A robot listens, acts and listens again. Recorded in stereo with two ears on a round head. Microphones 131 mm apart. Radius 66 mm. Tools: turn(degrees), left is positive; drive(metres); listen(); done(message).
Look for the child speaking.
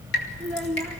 turn(degrees=30)
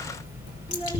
listen()
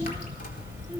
listen()
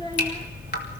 done("I heard a child speaking, but can't make it out now. It was about 25° right or 145° left.")